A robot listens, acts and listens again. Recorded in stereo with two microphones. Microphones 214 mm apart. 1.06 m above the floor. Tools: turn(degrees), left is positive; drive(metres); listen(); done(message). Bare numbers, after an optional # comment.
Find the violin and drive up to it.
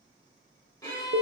# The violin: about 15° left or 165° left.
turn(15)
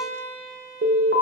drive(1.0)
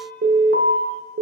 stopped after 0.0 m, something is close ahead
listen()
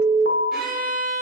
done("Something is in my way. I am facing the violin but have not reached it.")